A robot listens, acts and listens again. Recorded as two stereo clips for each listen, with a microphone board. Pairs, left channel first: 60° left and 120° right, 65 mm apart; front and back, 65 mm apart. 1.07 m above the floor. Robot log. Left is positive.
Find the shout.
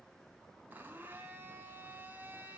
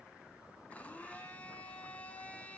cmd idle
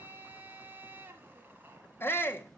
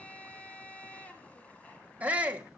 note: The shout: 115° left.
cmd yaw +115
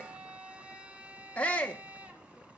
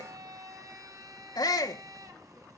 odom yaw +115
note: The shout is now 10° right.
cmd yaw -10
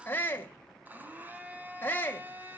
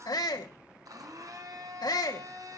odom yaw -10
end: Facing the shout.